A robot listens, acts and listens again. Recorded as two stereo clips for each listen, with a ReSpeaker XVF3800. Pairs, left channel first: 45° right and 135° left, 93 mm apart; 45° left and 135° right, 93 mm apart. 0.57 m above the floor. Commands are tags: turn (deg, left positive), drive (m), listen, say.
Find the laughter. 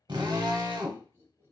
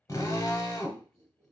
<turn deg="-170"/>
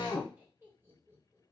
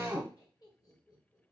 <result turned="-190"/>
<turn deg="80"/>
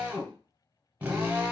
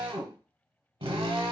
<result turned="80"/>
<listen/>
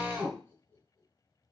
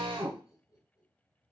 <turn deg="10"/>
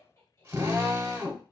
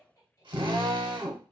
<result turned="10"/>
<say>Facing the laughter, 2 to 4 m away.</say>